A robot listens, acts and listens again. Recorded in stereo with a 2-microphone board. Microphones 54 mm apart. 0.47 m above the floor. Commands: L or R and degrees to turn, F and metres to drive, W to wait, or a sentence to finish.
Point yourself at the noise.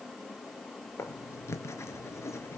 L60
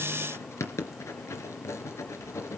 L60
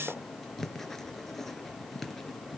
Found it: writing, straight ahead.